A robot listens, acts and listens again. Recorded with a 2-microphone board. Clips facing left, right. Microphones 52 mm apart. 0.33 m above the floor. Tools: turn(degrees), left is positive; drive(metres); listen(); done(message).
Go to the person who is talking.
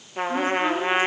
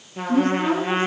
turn(degrees=30)
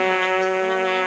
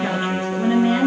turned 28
turn(degrees=-25)
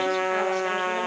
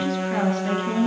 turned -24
drive(metres=1.0)
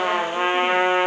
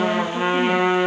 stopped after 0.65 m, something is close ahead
listen()
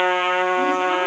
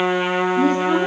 listen()
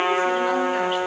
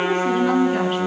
done("I heard a woman speaking from this way, but can't make it out now. I did not reach it.")